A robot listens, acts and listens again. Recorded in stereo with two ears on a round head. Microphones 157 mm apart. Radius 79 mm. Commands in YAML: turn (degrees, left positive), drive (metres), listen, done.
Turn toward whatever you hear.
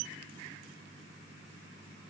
listen: true
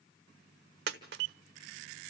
turn: -65
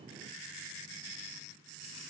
listen: true
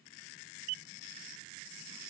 done: "I heard a dropped coin, but can't make it out now. It was about straight ahead or 50° right."